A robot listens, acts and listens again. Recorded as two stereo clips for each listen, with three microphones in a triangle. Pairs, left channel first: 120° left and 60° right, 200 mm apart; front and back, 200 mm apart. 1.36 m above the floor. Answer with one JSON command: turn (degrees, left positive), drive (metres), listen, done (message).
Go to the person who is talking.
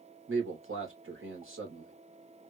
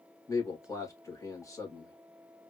{"turn": -75}
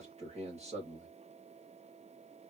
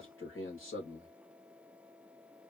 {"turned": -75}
{"drive": 1.0}
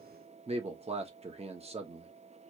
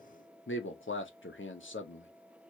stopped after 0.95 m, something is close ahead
{"done": "Arrived at the man speaking, straight ahead."}